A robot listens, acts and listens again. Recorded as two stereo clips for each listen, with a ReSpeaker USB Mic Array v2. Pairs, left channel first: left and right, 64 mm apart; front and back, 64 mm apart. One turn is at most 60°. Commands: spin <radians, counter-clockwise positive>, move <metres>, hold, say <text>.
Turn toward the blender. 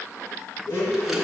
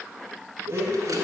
spin 1.05
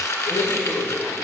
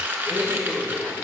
spin 1.05
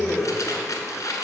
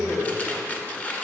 spin 0.26
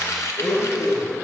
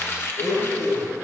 say Facing the blender.